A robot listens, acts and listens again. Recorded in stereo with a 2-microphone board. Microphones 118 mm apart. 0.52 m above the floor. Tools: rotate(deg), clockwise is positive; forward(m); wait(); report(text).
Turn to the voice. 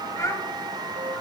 rotate(-30)
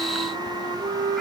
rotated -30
wait()
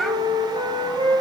report("Found it: a child speaking, straight ahead.")